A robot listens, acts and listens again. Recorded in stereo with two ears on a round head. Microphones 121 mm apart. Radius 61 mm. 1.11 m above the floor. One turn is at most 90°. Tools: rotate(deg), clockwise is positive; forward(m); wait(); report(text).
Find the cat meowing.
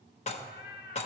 rotate(-70)
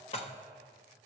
wait()
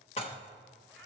report("Found it: a cat meowing, straight ahead, 1 to 2 m away.")